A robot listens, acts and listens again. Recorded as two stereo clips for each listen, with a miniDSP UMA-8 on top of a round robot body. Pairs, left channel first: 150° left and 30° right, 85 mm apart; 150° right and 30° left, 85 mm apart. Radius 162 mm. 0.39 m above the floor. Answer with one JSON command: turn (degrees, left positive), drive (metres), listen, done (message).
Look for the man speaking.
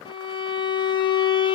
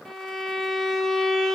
{"listen": true}
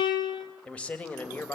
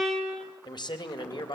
{"turn": -140}
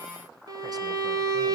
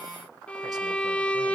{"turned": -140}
{"listen": true}
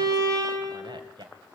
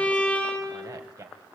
{"turn": -10}
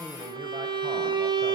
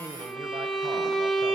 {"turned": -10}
{"listen": true}
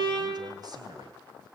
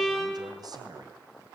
{"listen": true}
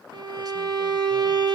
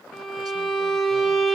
{"done": "I heard a man speaking from this way, but can't make it out now."}